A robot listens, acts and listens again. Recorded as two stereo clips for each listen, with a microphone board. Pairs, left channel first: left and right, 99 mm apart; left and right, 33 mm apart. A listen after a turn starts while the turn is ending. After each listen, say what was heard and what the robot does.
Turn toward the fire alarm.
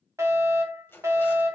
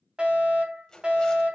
The fire alarm: about 30° right or 150° right. Turn 30° right.
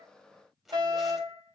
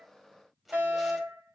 So it is at 115° right. Turn 115° right.
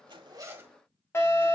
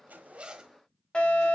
The fire alarm is now 35° left. Turn 35° left.
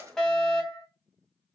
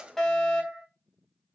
The fire alarm is now 10° left. Turn 10° left.
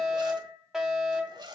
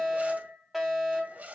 Facing the fire alarm, 2 to 4 m away.